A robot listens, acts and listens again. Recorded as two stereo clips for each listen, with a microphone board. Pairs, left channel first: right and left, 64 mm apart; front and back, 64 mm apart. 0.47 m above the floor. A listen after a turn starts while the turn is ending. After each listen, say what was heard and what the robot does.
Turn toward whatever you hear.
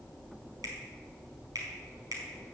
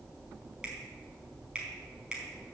The finger snap: 105° left. Turn 105° left.
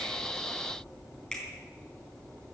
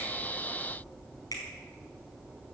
The finger snap is now 10° right. Turn 10° right.
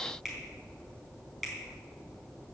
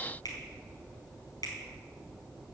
Found it: a finger snap, straight ahead.